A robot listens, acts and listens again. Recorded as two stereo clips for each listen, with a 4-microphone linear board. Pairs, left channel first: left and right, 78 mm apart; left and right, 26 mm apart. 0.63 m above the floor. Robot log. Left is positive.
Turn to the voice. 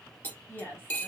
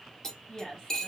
note: The woman speaking: about 30° left or 150° left.
cmd yaw +30
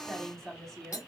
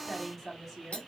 end: Found it: a woman speaking, straight ahead.